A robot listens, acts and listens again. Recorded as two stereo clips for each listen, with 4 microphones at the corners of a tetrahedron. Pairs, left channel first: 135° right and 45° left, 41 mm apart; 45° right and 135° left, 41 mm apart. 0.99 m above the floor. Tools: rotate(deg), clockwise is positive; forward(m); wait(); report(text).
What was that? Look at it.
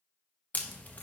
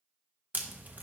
rotate(-175)
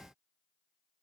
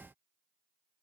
report("Facing where the crack came from. I can't hear it now.")